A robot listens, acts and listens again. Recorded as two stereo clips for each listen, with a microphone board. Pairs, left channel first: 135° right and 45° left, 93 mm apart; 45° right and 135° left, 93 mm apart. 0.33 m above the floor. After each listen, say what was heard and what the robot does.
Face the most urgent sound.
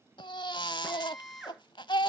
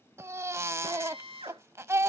The baby crying: 165° right. Turn 165° right.
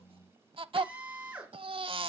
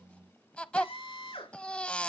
The baby crying is now 30° left. Turn 30° left.
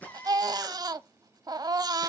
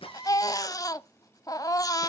Found it: a baby crying, straight ahead.